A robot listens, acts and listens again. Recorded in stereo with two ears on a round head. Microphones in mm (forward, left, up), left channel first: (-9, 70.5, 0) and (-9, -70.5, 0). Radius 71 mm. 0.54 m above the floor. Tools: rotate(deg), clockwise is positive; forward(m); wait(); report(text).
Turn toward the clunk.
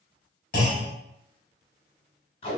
rotate(-60)
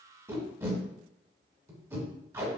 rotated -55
wait()
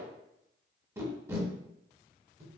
report("I heard a clunk, but can't make it out now. It was about 5° left or 65° left.")